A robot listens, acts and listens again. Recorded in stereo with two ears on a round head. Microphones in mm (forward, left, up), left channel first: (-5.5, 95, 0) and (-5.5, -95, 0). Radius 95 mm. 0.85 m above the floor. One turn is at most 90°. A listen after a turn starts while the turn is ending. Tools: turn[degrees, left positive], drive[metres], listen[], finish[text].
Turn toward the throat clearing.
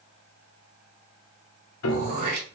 Thought: The throat clearing: about 50° right or 130° right.
Action: turn[-50]
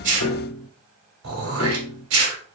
Thought: So it is at 75° right.
Action: turn[-75]
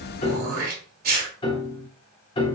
Thought: The throat clearing is now 45° right.
Action: turn[-45]
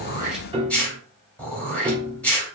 Action: finish[Found it: throat clearing, straight ahead, 2 to 4 m away.]